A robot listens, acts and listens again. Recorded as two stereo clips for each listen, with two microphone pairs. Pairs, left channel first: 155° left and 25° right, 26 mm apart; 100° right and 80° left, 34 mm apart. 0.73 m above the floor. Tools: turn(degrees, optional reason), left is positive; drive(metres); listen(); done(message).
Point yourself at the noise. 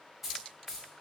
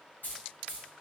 turn(degrees=-95, reason="The keys jangling: 95° right.")
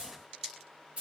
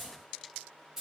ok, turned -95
done("Found it: keys jangling, straight ahead, 1 to 2 m away.")